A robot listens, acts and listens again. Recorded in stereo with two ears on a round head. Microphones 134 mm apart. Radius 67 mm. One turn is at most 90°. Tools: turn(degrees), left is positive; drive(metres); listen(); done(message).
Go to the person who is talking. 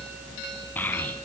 turn(degrees=30)
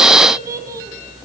turn(degrees=-20)
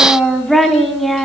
drive(metres=1.0)
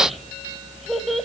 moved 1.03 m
drive(metres=1.0)
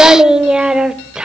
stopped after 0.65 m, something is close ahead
done("Arrived at the child speaking, straight ahead.")